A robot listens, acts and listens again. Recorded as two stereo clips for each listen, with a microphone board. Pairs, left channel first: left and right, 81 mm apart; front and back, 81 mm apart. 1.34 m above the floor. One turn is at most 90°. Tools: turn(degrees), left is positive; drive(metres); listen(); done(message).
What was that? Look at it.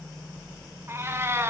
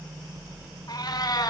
turn(degrees=-30)
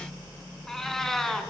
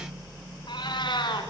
done("Found it: a cat meowing, straight ahead.")